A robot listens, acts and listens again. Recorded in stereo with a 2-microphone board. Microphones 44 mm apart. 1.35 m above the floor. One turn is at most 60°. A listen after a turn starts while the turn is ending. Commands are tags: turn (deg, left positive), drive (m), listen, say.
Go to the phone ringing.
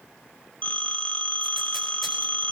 <turn deg="35"/>
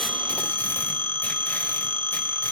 <turn deg="60"/>
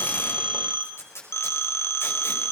<turn deg="60"/>
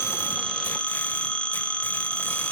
<turn deg="25"/>
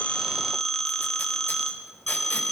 <drive m="1.0"/>
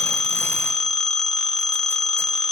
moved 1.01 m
<turn deg="10"/>
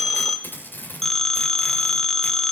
<drive m="1.0"/>
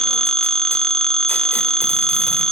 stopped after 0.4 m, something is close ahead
<turn deg="10"/>
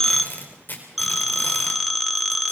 <say>I am next to the phone ringing.</say>